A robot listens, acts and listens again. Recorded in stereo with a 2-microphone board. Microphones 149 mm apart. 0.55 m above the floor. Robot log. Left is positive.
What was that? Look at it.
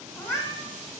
note: The cat meowing: about 20° left or 160° left.
cmd yaw +20
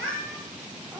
cmd yaw +30
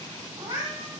note: So it is at 25° right.
cmd yaw -25
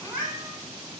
end: Found it: a cat meowing, straight ahead.